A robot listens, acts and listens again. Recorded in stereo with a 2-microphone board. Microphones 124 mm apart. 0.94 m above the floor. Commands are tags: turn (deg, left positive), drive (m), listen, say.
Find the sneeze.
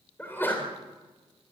<turn deg="20"/>
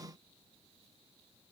<listen/>
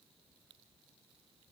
<say>I heard a sneeze, but can't make it out now. It was about straight ahead or 140° left.</say>